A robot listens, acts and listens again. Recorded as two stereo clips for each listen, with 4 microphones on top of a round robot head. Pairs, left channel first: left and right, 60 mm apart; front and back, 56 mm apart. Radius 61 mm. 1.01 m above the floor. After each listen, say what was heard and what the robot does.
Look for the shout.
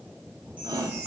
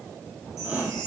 The shout: 110° right. Turn 110° right.
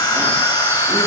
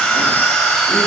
Keep listening.
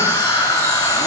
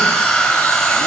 Keep listening.
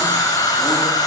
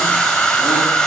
Facing where the shout came from. I can't hear it now.